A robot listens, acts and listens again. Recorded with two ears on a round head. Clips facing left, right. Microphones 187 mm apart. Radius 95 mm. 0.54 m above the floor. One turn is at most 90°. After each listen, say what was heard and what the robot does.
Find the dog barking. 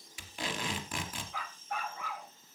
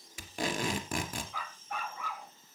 Turn 90° right.
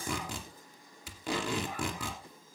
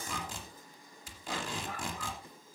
Keep listening.
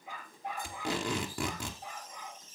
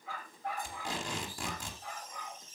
The dog barking is now 20° left. Turn 20° left.
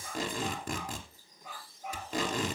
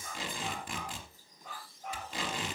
Facing the dog barking, over 4 m away.